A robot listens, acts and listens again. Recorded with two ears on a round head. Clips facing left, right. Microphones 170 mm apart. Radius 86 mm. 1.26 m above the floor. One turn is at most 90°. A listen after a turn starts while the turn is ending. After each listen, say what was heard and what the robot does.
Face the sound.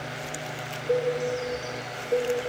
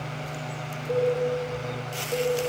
The cowbell: about 35° left or 145° left. Turn 35° left.
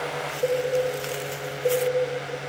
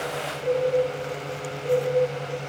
So it is at 115° left. Turn 90° left.
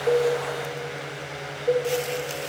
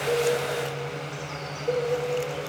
The cowbell is now 35° left. Turn 35° left.
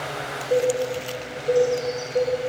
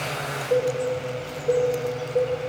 Facing the cowbell, 1 to 2 m away.